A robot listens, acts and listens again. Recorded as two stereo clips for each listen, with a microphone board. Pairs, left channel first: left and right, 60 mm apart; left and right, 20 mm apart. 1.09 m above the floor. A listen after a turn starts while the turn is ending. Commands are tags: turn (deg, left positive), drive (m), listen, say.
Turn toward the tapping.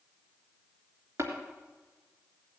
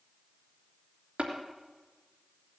<turn deg="-45"/>
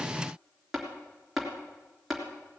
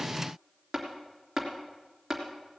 <say>Facing the tapping, 2 to 4 m away.</say>